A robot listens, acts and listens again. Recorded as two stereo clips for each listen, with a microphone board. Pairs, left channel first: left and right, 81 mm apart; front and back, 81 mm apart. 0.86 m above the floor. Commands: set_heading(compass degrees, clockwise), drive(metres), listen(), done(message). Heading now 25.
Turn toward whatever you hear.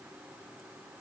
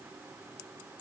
listen()
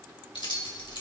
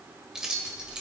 set_heading(285)
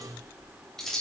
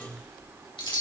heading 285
done("Facing the keys jangling.")